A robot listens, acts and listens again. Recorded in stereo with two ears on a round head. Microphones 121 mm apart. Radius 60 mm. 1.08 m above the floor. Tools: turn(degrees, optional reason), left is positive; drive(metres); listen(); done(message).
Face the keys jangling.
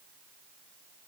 listen()
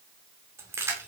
turn(degrees=-20, reason="The keys jangling: about 20° right or 160° right.")
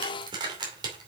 turn(degrees=-35, reason="The keys jangling: about 35° right or 145° right.")
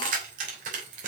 turn(degrees=-115, reason="So it is at 115° right.")
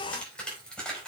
done("Facing the keys jangling, over 4 m away.")